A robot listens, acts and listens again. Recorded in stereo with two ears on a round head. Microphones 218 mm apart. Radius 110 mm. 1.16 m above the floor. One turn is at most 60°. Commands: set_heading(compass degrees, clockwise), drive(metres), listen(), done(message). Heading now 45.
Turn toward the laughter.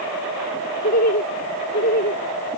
set_heading(5)
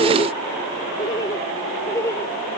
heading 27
set_heading(17)
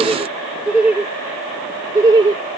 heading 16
set_heading(31)
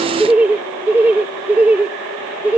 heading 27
done("Facing the laughter.")